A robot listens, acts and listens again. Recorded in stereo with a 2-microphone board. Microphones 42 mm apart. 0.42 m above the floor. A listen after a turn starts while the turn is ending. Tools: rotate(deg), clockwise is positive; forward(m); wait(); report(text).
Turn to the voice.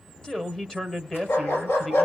rotate(-15)
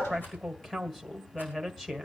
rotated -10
rotate(-30)
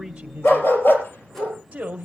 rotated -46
rotate(35)
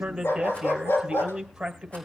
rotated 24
rotate(15)
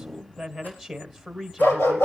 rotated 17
report("Found it: a man speaking, straight ahead, 1 to 2 m away.")